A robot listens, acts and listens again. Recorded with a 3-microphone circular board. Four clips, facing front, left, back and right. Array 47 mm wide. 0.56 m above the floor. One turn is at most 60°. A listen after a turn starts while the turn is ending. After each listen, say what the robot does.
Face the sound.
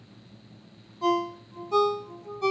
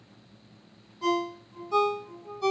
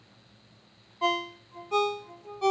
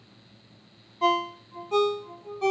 Turn 60° right.
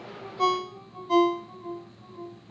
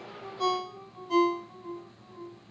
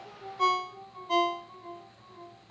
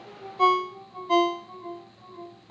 Turn 60° right.
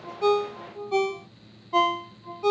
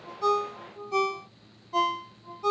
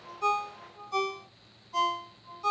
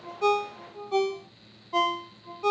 Turn 30° right.
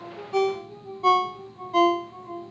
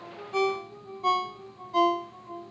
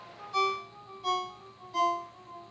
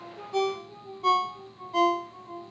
Found it: a ringtone, straight ahead.